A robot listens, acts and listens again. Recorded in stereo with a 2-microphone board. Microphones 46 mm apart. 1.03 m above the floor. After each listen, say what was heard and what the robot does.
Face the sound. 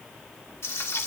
Turn 90° left.
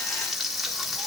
Facing the frying.